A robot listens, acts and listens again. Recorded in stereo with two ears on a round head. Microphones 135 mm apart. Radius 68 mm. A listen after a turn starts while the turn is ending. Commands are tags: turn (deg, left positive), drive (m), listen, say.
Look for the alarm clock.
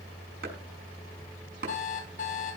<turn deg="50"/>
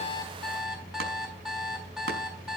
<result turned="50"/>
<say>Facing the alarm clock.</say>